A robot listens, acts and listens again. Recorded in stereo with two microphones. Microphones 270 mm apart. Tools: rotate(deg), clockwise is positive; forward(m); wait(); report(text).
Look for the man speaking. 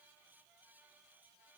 wait()
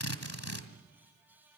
wait()
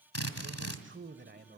rotate(40)
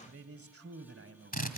rotate(125)
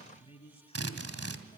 rotate(-20)
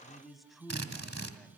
report("Facing the man speaking.")